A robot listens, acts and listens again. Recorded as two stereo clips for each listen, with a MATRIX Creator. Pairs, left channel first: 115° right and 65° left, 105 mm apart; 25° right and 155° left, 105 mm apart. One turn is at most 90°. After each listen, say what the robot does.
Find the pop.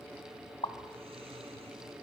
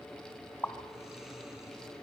Turn 90° right.
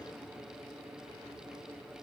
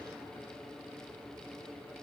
Facing where the pop came from. I can't hear it now.